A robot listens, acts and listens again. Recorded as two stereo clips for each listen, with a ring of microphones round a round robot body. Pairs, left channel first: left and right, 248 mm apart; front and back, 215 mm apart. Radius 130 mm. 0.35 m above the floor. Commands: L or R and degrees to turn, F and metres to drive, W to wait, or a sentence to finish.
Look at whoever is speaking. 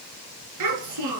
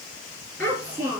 R75
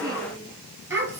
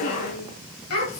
R10
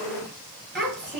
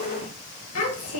Found it: a child speaking, straight ahead, over 4 m away.